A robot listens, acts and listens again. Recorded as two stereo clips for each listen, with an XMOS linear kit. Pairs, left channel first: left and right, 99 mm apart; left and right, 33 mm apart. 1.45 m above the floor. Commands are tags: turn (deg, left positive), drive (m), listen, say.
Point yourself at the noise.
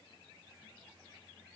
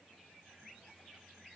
<listen/>
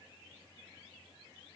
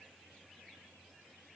<listen/>
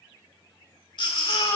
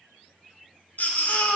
<turn deg="55"/>
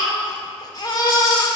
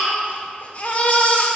<turn deg="55"/>
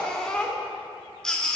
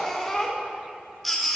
<say>Found it: a baby crying, straight ahead, 1 to 2 m away.</say>